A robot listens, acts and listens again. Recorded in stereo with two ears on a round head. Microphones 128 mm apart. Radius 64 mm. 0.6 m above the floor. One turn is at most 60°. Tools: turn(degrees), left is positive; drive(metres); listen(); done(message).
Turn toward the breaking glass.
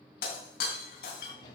turn(degrees=60)
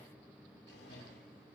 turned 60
listen()
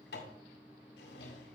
done("I heard breaking glass, but can't make it out now. It was about 10° left or 50° left.")